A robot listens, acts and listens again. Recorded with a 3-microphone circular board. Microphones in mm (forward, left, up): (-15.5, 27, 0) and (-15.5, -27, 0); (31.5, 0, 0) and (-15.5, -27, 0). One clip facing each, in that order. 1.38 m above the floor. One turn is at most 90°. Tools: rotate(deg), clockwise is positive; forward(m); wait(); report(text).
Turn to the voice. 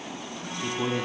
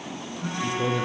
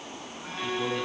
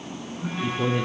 rotate(-90)
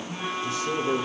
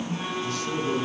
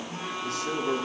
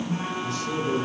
rotate(-15)
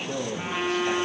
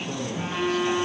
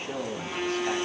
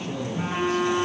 report("Facing the man speaking.")